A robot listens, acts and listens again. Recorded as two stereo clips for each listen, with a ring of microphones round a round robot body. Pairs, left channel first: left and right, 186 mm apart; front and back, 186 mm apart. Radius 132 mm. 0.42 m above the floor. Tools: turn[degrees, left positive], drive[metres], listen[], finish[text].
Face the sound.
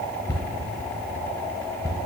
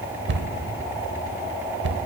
Thought: The cupboard door: 165° left.
Action: turn[165]
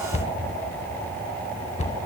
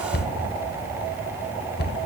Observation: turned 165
Thought: The cupboard door is now 35° left.
Action: turn[35]
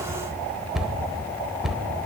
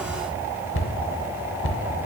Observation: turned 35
Action: finish[Found it: a cupboard door, straight ahead, under 1 m away.]